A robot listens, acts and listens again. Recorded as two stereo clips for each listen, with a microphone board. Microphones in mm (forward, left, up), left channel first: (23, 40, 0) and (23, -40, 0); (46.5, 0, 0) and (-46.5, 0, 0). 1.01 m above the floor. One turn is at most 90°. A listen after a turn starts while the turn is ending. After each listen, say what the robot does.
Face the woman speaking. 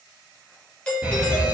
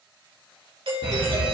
Keep listening.
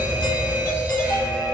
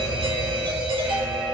Keep listening.
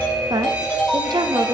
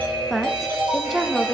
Turn 90° right.
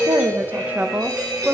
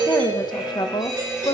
Turn 25° right.
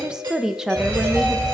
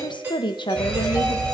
Turn 10° right.
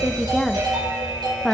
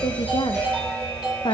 Found it: a woman speaking, straight ahead.